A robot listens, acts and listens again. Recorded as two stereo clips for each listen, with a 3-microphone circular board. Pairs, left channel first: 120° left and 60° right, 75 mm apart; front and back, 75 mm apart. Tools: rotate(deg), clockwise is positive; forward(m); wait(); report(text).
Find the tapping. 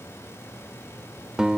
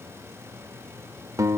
wait()
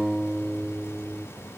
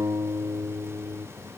wait()
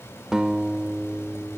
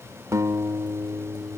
report("I can't make out tapping to turn to.")